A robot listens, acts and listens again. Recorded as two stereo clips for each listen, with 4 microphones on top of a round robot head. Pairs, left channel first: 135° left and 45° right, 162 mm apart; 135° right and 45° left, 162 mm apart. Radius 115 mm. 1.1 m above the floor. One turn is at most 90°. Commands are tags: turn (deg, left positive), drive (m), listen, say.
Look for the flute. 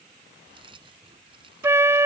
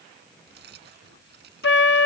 <turn deg="-90"/>
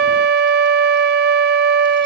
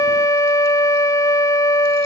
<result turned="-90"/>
<turn deg="-65"/>
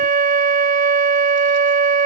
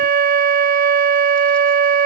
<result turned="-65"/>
<say>Found it: a flute, straight ahead.</say>